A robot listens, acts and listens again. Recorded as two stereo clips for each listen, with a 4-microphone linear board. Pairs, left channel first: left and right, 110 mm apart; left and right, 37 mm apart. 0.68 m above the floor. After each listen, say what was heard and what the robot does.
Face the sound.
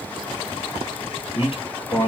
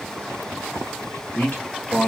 The man speaking: about 55° left or 125° left. Turn 55° left.
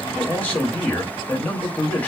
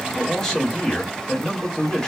So it is at 15° left. Turn 15° left.
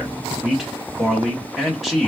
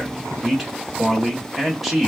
Found it: a man speaking, straight ahead, 1 to 2 m away.